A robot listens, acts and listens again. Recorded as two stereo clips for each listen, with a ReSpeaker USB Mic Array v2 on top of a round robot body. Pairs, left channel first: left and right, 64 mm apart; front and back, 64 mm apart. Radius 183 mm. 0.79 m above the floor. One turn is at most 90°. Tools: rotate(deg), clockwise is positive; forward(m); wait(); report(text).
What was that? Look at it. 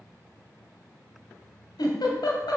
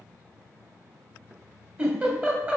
rotate(-90)
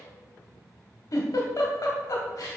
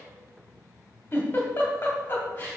rotate(-60)
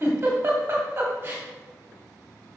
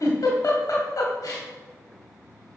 rotate(30)
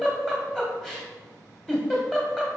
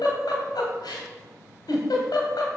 report("Facing the giggle, 1 to 2 m away.")